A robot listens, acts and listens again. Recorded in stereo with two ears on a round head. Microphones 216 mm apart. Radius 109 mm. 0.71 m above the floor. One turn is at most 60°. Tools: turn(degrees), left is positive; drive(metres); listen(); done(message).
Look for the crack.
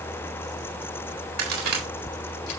turn(degrees=-60)
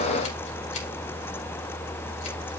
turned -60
listen()
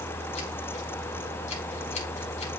done("I heard a crack, but can't make it out now. It was about straight ahead or 60° right.")